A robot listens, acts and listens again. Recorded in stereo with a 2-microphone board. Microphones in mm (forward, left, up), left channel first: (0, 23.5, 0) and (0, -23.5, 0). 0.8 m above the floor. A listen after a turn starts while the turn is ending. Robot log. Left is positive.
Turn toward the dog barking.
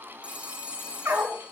note: The dog barking: about 70° right or 110° right.
cmd yaw -70
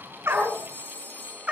note: So it is at 25° right.
cmd yaw -25
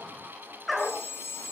end: Facing the dog barking, over 4 m away.